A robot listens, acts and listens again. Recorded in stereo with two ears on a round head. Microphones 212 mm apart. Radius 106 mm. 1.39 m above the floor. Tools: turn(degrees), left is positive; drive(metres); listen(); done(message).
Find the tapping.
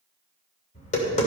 turn(degrees=35)
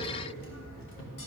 turn(degrees=110)
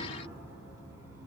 listen()
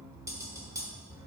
turn(degrees=-15)
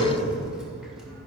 done("Found it: tapping, straight ahead, 2 to 4 m away.")